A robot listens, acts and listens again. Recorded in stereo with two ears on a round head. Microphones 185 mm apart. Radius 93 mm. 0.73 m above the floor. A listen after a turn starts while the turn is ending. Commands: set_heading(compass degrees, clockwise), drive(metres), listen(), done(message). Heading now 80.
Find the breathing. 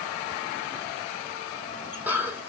set_heading(110)
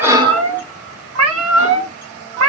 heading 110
listen()
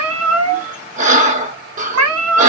set_heading(250)
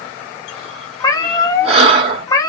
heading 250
set_heading(280)
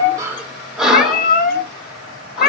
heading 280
done("Facing the breathing.")